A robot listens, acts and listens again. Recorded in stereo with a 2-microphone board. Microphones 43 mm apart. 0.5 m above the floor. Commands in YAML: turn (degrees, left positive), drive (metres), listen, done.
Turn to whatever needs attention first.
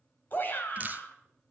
turn: 45
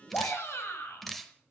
turn: 85
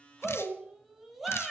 done: "Found it: a shout, straight ahead."